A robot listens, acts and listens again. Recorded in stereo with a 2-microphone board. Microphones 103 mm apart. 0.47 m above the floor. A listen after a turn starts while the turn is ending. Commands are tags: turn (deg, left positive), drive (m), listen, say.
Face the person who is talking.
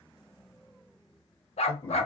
<turn deg="25"/>
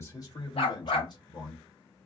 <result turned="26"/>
<turn deg="125"/>
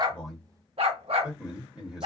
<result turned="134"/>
<turn deg="-10"/>
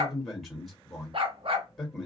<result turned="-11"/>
<say>Facing the man speaking, 1 to 2 m away.</say>